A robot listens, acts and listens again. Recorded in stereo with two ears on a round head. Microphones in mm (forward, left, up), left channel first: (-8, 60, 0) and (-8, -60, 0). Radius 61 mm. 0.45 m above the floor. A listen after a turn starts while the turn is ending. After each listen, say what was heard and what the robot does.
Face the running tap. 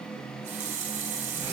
The running tap: about 55° right or 125° right. Turn 55° right.
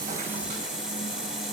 Found it: a running tap, straight ahead.